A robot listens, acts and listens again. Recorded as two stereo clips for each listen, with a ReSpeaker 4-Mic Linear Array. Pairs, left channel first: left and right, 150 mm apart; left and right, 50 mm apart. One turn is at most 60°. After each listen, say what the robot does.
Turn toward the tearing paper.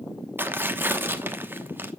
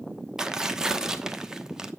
Turn 30° right.
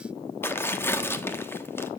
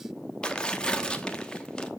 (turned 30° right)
Turn 15° left.
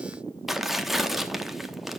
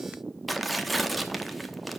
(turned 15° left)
Found it: tearing paper, straight ahead.